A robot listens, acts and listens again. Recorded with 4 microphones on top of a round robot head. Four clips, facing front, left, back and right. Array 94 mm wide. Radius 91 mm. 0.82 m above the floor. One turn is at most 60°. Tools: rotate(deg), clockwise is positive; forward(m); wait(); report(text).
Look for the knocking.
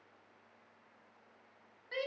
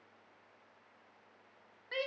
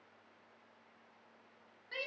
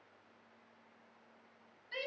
wait()
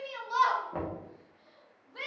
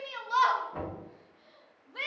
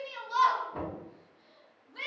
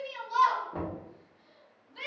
rotate(15)
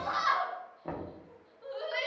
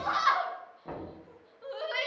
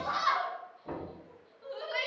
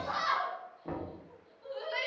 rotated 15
report("Found it: knocking, straight ahead, under 1 m away.")